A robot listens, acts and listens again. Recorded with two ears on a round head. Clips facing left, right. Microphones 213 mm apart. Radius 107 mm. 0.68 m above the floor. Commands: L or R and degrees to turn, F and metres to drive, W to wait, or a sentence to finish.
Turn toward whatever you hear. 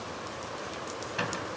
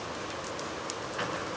L45
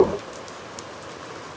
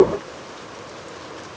W
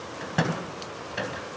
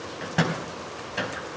Found it: a microwave, straight ahead, 2 to 4 m away.